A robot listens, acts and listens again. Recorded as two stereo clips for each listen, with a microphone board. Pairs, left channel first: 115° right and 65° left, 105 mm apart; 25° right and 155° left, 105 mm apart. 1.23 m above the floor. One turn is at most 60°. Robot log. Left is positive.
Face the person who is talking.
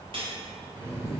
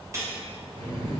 cmd idle
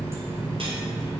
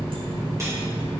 cmd idle
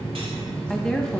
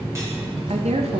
note: The woman speaking: 165° left.
cmd yaw +60
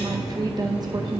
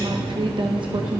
note: The woman speaking is now 120° left.
cmd yaw +60
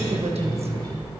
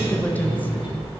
note: The woman speaking is now 50° left.
cmd yaw +50
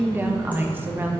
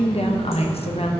end: Found it: a woman speaking, straight ahead, 1 to 2 m away.